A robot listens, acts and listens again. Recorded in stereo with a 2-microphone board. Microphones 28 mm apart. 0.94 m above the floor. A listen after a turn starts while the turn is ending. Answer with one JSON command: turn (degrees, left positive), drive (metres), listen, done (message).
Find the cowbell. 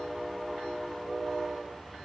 {"listen": true}
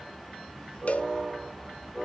{"turn": 50}
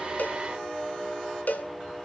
{"turn": 80}
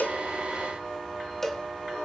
{"turn": 10}
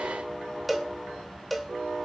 {"done": "Found it: a cowbell, straight ahead, 1 to 2 m away."}